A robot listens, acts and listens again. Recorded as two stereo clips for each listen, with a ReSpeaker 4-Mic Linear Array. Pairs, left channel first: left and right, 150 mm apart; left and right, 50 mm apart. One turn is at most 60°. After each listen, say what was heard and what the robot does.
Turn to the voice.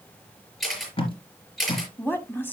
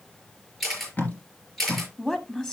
Turn 30° left.
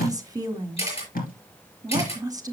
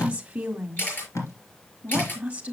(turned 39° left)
So it is at 25° right. Turn 25° right.
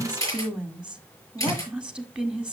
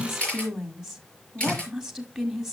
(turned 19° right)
Facing the woman speaking.